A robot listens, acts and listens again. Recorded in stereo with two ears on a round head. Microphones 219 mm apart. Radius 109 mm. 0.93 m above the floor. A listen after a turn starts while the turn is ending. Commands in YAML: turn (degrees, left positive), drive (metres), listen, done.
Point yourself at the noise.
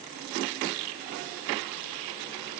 listen: true
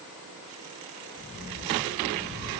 turn: 40
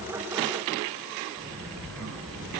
done: "Facing the sliding door, over 4 m away."